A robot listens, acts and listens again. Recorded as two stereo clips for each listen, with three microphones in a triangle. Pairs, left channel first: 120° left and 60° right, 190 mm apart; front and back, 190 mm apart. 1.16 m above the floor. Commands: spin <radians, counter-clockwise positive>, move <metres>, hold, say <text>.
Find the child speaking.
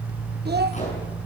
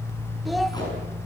spin -1.57
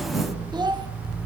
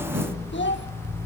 say Facing the child speaking, 1 to 2 m away.